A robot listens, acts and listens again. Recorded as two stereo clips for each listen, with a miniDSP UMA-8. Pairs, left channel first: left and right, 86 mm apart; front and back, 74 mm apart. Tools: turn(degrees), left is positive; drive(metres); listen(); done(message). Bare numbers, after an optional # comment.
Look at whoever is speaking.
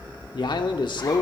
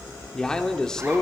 # The man speaking: 80° left.
turn(80)
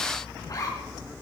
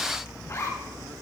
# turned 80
listen()
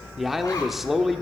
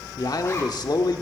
done("Found it: a man speaking, straight ahead.")